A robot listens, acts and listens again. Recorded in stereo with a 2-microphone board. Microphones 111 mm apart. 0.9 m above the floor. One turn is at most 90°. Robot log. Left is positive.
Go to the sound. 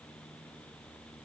cmd idle
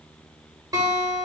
note: The guitar: about 35° right or 145° right.
cmd yaw -35
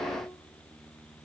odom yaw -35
cmd idle
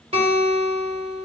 note: So it is at 110° right.
cmd yaw -90
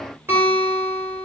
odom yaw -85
note: The guitar is now 20° right.
cmd yaw -20
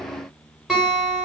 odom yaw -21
cmd fwd 1.0
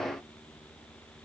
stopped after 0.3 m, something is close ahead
cmd idle
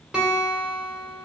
end: Something is in my way. I am facing the guitar but have not reached it.